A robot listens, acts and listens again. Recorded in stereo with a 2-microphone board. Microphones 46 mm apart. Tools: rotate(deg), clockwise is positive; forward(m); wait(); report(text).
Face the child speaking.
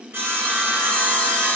wait()
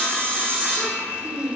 rotate(45)
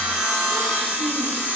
wait()
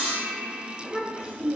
rotate(10)
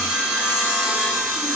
wait()
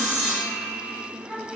report("Found it: a child speaking, straight ahead, over 4 m away.")